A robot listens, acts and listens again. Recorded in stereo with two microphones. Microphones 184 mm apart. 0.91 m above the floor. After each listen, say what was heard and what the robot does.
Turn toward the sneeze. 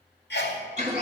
The sneeze: about 70° left or 110° left. Turn 70° left.
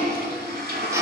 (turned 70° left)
Keep listening.
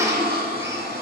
I heard a sneeze, but can't make it out now. It was about straight ahead or 40° left.